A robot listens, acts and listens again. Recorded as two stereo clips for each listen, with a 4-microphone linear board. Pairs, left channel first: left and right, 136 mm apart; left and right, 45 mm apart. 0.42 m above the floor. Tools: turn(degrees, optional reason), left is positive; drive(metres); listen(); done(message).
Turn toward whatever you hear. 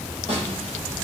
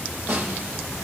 turn(degrees=-55, reason="The snare drum: about 55° right or 125° right.")
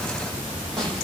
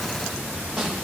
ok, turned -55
done("Found it: a snare drum, straight ahead, over 4 m away.")